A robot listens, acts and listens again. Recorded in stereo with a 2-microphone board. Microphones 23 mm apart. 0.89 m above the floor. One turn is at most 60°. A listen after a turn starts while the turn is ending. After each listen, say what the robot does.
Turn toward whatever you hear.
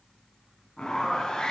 Turn 35° left.
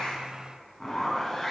Facing the zipper, 2 to 4 m away.